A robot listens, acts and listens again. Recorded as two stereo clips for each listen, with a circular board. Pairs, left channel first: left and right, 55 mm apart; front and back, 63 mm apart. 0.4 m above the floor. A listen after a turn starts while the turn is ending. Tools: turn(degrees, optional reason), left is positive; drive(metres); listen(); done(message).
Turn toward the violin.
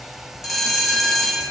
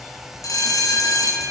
listen()
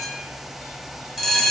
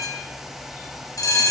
listen()
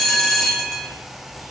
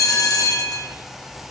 done("I can't make out a violin, only a bell.")